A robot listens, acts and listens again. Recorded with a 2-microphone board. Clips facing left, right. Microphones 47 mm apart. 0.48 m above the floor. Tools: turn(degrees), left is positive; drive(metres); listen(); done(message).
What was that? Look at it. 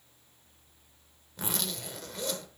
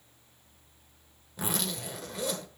turn(degrees=-30)
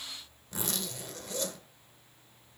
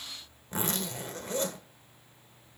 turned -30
turn(degrees=-140)
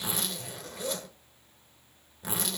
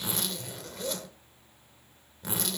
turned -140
done("Facing the zipper.")